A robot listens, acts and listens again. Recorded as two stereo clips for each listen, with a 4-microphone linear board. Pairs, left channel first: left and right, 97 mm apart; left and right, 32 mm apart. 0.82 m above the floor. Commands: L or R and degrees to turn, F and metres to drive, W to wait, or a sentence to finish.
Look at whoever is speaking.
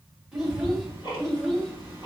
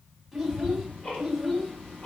L30
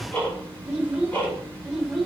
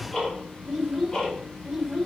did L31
R30
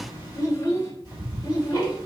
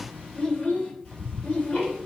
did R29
L45
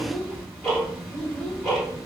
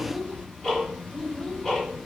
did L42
L10
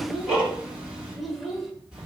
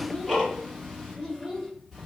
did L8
Facing the child speaking, 1 to 2 m away.